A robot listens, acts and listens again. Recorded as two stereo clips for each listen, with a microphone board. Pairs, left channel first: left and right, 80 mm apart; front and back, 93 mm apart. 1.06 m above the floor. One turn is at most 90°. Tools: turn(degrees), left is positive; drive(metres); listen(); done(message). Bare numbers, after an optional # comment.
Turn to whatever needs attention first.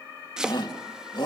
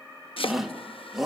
# The shout: 95° left.
turn(90)
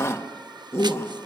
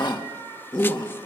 # The shout is now 35° left.
turn(35)
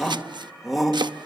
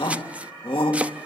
done("Found it: a shout, straight ahead, 2 to 4 m away.")